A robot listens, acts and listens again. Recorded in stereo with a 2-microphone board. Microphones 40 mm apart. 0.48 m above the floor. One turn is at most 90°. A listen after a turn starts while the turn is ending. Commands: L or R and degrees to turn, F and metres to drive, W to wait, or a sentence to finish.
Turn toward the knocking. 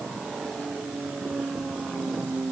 W
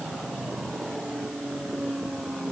W
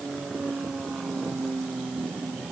I can't make out knocking to turn to.